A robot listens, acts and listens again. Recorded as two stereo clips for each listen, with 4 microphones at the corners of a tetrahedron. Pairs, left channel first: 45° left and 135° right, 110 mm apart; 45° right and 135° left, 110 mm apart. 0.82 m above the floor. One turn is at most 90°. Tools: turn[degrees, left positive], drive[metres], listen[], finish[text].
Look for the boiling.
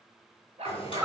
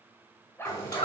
Action: finish[Found it: boiling, straight ahead.]